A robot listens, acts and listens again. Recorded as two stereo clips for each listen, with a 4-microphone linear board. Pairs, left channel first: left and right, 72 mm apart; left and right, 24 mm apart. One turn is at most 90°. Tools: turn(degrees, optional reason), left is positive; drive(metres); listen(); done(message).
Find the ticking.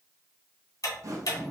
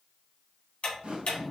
turn(degrees=55, reason="The ticking: about 55° left or 125° left.")
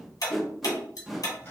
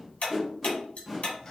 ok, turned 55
turn(degrees=70, reason="So it is at 70° left.")
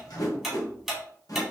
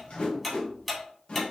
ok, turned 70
done("Facing the ticking, 1 to 2 m away.")